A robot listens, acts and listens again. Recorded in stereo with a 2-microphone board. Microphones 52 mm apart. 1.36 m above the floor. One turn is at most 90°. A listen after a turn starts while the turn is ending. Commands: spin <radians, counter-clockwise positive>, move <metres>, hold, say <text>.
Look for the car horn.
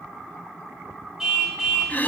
spin -0.52
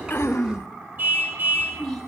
spin -1.57
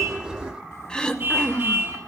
spin -0.70
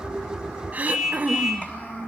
say Found it: a car horn, straight ahead.